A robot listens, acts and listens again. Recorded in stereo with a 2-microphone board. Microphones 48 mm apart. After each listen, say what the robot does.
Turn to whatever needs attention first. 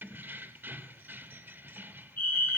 Turn 50° left.
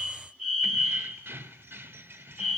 Found it: a fire alarm, straight ahead.